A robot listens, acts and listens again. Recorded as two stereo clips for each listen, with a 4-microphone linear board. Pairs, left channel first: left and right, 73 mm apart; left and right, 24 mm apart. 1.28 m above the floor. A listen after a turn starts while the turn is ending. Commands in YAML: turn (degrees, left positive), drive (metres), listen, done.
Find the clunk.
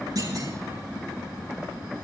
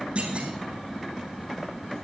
turn: -55
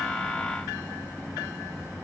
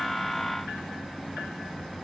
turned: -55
listen: true
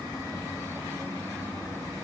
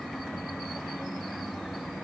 done: "I heard a clunk, but can't make it out now. It was about straight ahead or 70° right."